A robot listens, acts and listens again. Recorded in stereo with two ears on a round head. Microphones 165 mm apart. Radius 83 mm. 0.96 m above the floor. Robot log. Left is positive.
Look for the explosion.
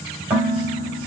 cmd idle
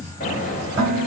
note: The explosion: about 40° left or 140° left.
cmd yaw +40
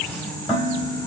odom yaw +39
cmd idle
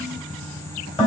end: I heard an explosion, but can't make it out now. It was about 5° left or 100° left.